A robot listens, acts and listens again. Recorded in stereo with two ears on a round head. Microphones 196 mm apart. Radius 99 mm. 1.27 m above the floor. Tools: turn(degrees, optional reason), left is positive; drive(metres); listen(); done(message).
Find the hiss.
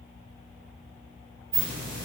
turn(degrees=-40, reason="The hiss: about 40° right or 140° right.")
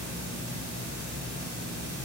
turn(degrees=-100, reason="So it is at 100° right.")
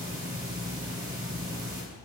turn(degrees=-15, reason="The hiss is now 15° right.")
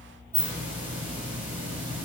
turn(degrees=-10, reason="The hiss is now 10° right.")
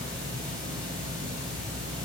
done("Facing the hiss.")